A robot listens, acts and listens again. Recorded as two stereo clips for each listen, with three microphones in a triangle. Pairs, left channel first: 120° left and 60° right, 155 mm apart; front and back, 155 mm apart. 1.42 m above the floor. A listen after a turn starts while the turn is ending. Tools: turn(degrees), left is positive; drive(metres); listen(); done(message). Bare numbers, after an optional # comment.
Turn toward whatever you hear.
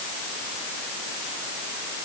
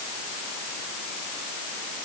listen()
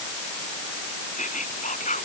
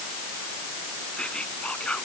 # The whispering: 85° left.
turn(85)
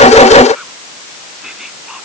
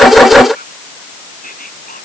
listen()
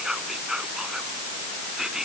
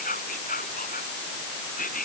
# The whispering is now 25° left.
turn(25)
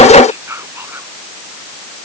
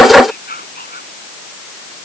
# The whispering is now 15° left.
turn(15)
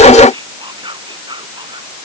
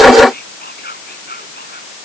done("Facing the whispering.")